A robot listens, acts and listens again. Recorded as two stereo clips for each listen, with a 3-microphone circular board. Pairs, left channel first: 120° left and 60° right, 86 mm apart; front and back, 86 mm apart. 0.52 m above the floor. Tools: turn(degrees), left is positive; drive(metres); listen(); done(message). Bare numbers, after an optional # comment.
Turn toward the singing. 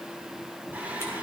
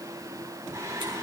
# The singing: 130° right.
turn(-130)
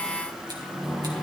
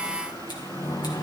# The singing is now 35° left.
turn(35)
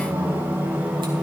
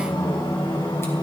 # The singing is now 10° left.
turn(10)
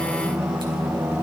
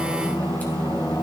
done("Facing the singing.")